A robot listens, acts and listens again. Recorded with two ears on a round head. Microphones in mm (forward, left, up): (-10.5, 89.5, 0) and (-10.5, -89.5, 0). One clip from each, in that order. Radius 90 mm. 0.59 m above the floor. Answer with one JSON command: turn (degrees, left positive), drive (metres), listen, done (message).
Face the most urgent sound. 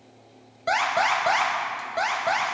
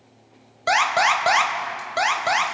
{"turn": -40}
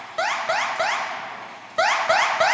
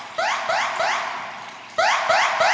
{"done": "Facing the alarm, 1 to 2 m away."}